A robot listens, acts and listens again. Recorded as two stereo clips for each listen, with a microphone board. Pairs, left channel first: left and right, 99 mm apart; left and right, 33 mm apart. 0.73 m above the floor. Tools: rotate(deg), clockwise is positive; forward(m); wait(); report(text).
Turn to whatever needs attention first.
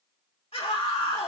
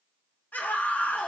rotate(-65)
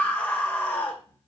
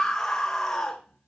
rotate(-20)
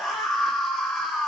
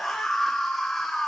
report("Found it: a scream, straight ahead, 2 to 4 m away.")